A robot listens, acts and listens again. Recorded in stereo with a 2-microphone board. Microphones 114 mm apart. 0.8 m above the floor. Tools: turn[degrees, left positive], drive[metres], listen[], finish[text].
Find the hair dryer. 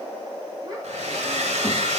Action: turn[-90]
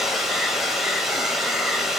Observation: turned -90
Action: finish[Found it: a hair dryer, straight ahead, 1 to 2 m away.]